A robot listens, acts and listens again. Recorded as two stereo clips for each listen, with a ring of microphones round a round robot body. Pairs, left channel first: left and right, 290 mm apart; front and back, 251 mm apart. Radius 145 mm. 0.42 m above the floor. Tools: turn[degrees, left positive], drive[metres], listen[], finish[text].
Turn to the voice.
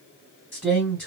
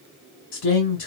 Action: finish[Found it: a man speaking, straight ahead, 1 to 2 m away.]